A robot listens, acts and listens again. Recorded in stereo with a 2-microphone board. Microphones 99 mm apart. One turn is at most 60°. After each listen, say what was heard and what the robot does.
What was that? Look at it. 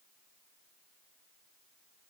Keep listening.
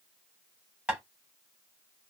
Turn 30° right.
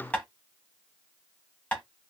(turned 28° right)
So it is at 15° left. Turn 15° left.
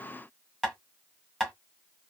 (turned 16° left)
Found it: tapping, straight ahead, 1 to 2 m away.